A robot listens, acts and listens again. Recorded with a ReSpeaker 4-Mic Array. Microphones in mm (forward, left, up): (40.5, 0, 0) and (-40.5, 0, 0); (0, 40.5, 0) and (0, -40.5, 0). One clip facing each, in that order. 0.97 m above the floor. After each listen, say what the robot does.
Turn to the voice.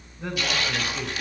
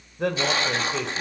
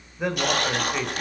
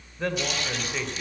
Turn 170° left.
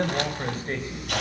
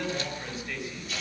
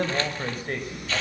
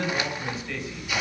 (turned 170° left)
Turn 45° left.
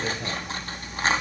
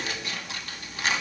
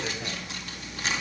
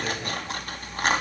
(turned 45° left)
Keep listening.
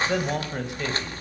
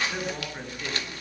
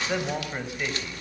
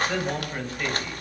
Turn 15° left.
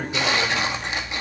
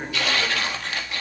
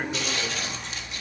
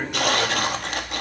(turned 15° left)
Keep listening.
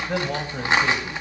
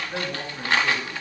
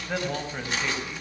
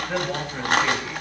Keep listening.
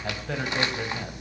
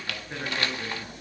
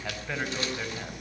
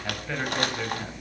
Facing where the man speaking came from. I can't hear it now.